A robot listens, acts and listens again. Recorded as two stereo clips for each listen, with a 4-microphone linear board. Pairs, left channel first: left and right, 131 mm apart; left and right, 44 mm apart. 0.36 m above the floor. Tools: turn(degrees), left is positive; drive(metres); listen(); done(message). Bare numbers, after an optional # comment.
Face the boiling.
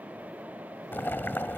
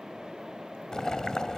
# The boiling: about 15° left or 165° left.
turn(15)
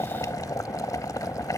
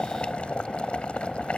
# So it is at 155° left.
turn(155)
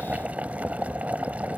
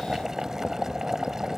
# The boiling is now 15° right.
turn(-15)
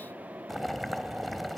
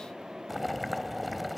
done("Found it: boiling, straight ahead.")